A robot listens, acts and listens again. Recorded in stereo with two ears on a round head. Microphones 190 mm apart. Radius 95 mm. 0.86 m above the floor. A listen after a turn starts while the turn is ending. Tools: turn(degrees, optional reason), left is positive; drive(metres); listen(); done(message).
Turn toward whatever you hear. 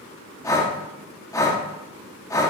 turn(degrees=15, reason="The breathing: about 15° left or 165° left.")
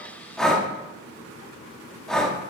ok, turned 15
done("Facing the breathing.")